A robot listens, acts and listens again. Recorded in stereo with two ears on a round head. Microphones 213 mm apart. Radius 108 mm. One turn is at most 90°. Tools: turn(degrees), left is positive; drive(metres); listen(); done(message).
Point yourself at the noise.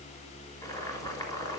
turn(degrees=15)
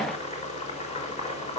turn(degrees=90)
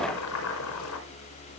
turn(degrees=65)
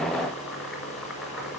done("Facing the boiling.")